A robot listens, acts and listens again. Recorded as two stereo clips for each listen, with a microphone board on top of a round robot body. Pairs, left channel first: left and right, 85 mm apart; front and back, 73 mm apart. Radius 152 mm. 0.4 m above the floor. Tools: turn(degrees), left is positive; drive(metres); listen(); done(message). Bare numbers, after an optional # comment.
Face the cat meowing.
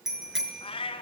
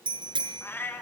# The cat meowing: 70° left.
turn(70)
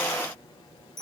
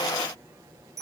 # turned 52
# Nothing new. It was at 20° left.
turn(20)
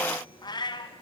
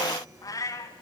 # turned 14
# The cat meowing is now 55° left.
turn(55)
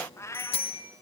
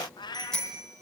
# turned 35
# The cat meowing is now 30° left.
turn(30)
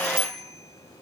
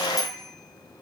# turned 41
# Nothing new. It was at 10° right.
turn(-10)
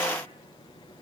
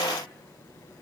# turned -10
listen()
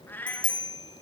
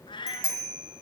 # The cat meowing is now 20° left.
turn(20)
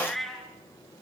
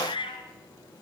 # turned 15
done("Found it: a cat meowing, straight ahead, 2 to 4 m away.")